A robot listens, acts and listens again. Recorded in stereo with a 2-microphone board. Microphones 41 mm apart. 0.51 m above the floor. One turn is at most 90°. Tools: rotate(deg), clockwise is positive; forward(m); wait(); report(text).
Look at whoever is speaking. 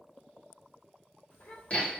rotate(-65)
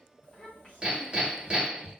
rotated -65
rotate(-35)
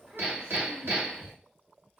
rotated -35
rotate(15)
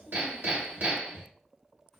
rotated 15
report("Found it: a child speaking, straight ahead, 1 to 2 m away.")